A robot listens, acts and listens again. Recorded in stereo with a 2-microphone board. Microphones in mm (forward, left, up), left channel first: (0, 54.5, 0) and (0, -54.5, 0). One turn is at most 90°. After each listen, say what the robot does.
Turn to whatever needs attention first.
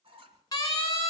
Turn 40° left.
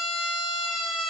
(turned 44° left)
Found it: a siren, straight ahead, over 4 m away.